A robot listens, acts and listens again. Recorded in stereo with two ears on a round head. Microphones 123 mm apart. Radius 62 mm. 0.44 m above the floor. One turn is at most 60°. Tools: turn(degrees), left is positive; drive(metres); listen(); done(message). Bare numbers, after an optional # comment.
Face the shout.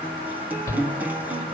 # The shout: about 25° left or 155° left.
turn(25)
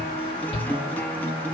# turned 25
# So it is at 125° left.
turn(60)
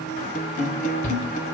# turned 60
# The shout is now 75° left.
turn(60)
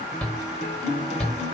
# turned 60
# The shout is now 10° left.
turn(10)
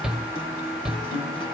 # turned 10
done("Facing the shout, 1 to 2 m away.")